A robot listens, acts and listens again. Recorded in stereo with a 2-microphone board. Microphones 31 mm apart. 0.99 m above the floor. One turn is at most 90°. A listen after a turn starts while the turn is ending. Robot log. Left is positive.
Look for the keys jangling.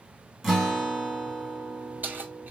cmd yaw -90
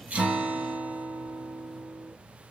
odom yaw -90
cmd idle
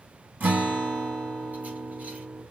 cmd idle
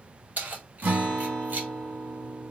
note: The keys jangling is now 65° right.
cmd yaw -65
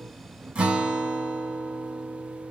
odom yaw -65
cmd idle
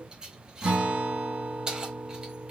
note: The keys jangling is now 25° right.
cmd yaw -25
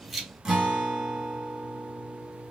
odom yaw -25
cmd idle
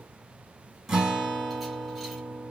cmd idle
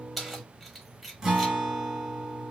end: Facing the keys jangling, 1 to 2 m away.